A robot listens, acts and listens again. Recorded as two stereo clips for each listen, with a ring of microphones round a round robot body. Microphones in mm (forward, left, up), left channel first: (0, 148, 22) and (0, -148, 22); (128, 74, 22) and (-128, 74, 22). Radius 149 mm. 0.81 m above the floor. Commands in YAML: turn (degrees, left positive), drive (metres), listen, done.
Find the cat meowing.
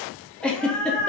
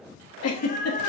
turn: 55
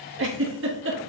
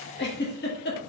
listen: true
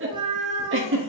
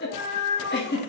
turn: -25
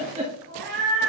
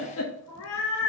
turn: -45
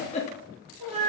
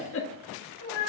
turn: -25
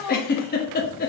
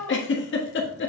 turn: -20
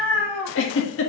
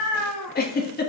done: "Facing the cat meowing."